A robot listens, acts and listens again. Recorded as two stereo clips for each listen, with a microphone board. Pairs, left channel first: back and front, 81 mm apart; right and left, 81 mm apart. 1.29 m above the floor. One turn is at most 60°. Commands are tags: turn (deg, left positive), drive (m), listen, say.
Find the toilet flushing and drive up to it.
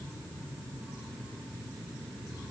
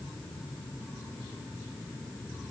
<listen/>
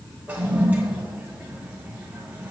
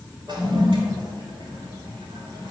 <turn deg="60"/>
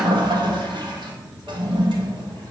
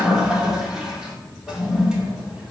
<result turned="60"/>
<turn deg="10"/>
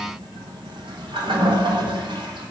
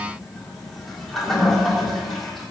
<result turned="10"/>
<drive m="1.0"/>
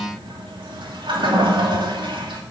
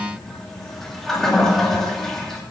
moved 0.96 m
<drive m="1.0"/>
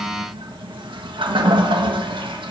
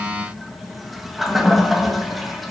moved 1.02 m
<drive m="1.0"/>
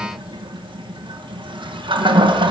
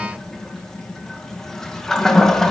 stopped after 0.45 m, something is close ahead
<say>Arrived at the toilet flushing, straight ahead.</say>